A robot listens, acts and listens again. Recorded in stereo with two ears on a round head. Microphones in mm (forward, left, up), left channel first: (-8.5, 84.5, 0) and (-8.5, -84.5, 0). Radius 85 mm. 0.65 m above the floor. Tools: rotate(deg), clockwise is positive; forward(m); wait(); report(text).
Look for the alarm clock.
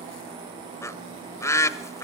wait()
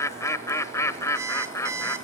rotate(15)
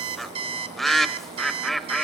rotate(150)
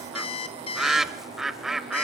rotate(-30)
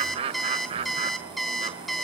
report("Facing the alarm clock, 1 to 2 m away.")